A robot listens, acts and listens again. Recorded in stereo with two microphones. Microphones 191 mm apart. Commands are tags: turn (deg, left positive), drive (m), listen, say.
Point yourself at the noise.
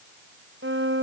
<turn deg="-90"/>
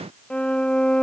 <say>Facing the violin.</say>